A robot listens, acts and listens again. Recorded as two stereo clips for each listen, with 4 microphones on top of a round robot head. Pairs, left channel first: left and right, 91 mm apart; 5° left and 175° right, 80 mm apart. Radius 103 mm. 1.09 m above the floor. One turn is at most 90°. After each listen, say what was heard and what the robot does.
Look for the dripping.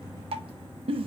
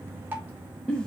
The dripping: 105° right. Turn 90° right.
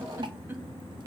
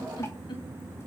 The dripping is now 55° right. Turn 55° right.
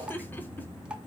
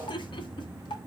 The dripping is now 10° right. Turn 10° right.
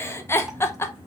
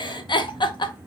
Keep listening.
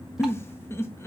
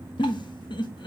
Keep listening.
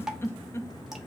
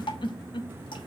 Facing the dripping.